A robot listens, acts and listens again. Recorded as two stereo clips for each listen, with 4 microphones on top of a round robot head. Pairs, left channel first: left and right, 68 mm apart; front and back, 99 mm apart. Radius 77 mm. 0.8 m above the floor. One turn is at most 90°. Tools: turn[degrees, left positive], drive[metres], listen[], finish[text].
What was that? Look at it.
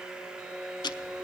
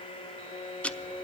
Thought: The ticking: 80° left.
Action: turn[80]
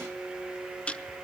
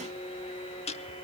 Thought: The ticking is now 15° left.
Action: turn[15]
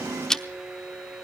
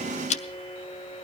Action: finish[Facing the ticking, under 1 m away.]